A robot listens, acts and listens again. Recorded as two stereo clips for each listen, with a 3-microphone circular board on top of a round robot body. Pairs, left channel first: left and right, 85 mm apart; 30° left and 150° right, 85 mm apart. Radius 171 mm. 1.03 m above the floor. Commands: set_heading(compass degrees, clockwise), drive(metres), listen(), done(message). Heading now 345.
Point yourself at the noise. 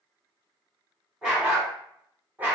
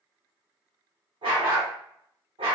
set_heading(145)
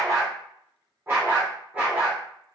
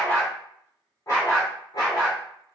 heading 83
set_heading(93)
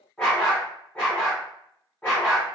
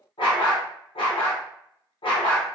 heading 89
set_heading(79)
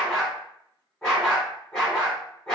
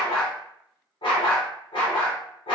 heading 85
done("Found it: a dog barking, straight ahead.")